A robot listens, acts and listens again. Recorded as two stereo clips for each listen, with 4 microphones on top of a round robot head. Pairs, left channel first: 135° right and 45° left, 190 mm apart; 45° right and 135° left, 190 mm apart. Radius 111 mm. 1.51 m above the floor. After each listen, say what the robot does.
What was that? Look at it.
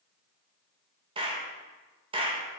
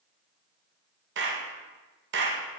Turn 110° left.
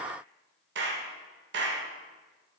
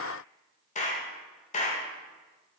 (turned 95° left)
Turn 10° left.
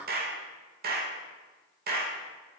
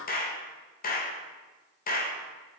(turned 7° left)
Found it: a clap, straight ahead, 1 to 2 m away.